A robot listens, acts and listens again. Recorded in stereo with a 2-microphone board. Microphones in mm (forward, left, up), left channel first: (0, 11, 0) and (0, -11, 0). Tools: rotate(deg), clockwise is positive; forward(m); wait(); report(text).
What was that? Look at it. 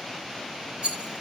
rotate(55)
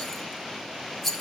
report("Found it: a rattle, straight ahead.")